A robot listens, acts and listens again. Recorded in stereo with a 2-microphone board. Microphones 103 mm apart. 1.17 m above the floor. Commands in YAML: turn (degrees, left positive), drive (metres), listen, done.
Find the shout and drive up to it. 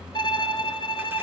listen: true
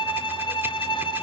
listen: true
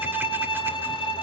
done: "I can't make out a shout to turn to."